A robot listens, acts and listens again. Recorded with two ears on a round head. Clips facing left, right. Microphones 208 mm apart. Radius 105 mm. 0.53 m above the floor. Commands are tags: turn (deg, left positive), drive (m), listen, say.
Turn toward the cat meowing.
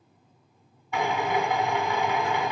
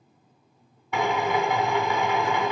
<listen/>
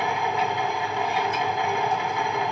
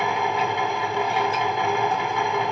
<listen/>
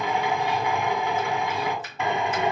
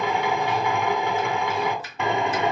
<say>I can't make out a cat meowing to turn to.</say>